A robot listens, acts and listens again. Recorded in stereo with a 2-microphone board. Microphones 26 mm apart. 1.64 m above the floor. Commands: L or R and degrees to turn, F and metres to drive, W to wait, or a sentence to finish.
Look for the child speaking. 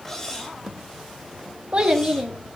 R30
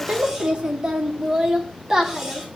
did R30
R20
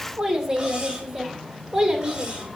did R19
R25
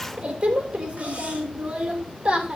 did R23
R50
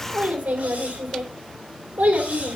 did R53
R70
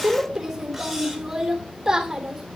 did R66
R15
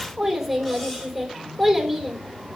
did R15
Found it: a child speaking, straight ahead.